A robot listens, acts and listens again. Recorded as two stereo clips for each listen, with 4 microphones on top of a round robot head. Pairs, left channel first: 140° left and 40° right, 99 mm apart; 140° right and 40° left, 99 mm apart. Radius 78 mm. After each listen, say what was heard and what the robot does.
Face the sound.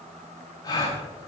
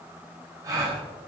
The gasp: 95° left. Turn 95° left.
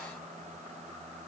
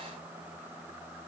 I heard a gasp from this way, but can't make it out now.